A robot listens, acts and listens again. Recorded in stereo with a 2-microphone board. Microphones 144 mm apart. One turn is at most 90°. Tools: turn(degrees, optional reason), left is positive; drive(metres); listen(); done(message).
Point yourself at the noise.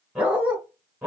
turn(degrees=-30)
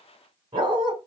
turn(degrees=-90, reason="So it is at 145° right.")
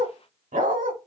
turn(degrees=-80, reason="The dog barking is now 80° right.")
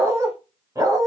turn(degrees=-25, reason="The dog barking is now 25° right.")
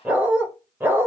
turn(degrees=-15, reason="The dog barking is now 15° right.")
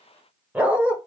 turn(degrees=-10, reason="The dog barking is now 10° right.")
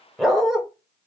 done("Facing the dog barking, 1 to 2 m away.")